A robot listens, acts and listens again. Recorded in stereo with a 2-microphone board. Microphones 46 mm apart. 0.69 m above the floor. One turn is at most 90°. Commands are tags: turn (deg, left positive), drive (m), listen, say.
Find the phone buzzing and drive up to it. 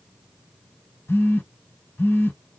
<turn deg="70"/>
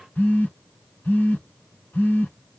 <turn deg="35"/>
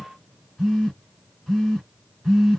<drive m="1.0"/>
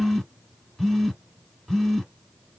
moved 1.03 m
<drive m="1.0"/>
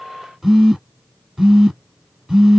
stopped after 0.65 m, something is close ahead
<turn deg="-15"/>
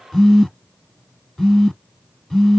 <say>Arrived at the phone buzzing, straight ahead.</say>